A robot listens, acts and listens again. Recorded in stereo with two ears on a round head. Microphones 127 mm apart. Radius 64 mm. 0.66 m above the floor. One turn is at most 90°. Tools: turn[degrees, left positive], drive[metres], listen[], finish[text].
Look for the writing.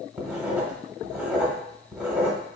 Action: turn[-30]
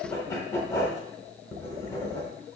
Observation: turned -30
Thought: So it is at 20° left.
Action: turn[20]
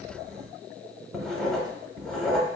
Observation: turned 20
Action: finish[Found it: writing, straight ahead.]